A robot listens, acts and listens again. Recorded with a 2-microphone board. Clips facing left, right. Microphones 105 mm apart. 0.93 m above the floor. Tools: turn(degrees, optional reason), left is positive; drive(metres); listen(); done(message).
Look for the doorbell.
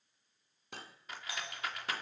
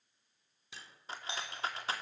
turn(degrees=-25, reason="The doorbell: about 25° right or 155° right.")
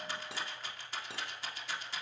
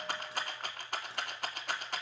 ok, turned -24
listen()
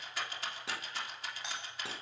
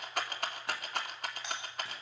done("Facing the doorbell, over 4 m away.")